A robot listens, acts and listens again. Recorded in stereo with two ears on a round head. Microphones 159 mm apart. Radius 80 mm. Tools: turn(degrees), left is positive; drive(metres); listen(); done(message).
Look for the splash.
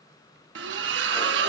turn(degrees=-70)
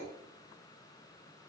listen()
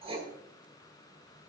done("I heard a splash, but can't make it out now. It was about straight ahead or 40° right.")